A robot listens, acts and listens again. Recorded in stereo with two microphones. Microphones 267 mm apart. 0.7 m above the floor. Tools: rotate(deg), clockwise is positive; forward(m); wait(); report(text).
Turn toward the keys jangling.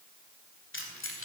rotate(-55)
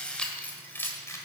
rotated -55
rotate(-10)
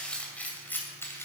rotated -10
rotate(-10)
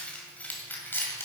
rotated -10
rotate(-10)
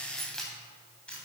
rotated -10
report("Facing the keys jangling.")